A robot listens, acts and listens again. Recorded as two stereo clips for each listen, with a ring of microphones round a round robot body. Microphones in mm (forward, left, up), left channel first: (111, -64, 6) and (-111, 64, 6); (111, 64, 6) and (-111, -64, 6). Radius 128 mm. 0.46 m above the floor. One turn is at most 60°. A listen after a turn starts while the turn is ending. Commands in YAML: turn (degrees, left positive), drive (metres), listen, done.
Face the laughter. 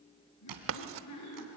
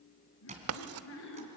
turn: -10
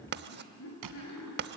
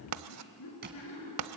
done: "Facing the laughter."